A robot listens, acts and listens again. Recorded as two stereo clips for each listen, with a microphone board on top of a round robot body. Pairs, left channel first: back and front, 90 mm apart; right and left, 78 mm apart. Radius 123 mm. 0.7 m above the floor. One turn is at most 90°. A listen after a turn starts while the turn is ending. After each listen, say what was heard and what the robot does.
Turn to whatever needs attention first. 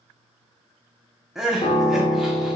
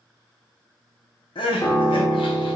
The crying: 85° right. Turn 85° right.
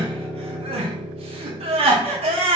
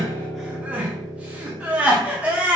The crying is now 15° left. Turn 15° left.
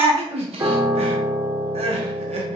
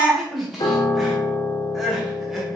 Found it: crying, straight ahead, under 1 m away.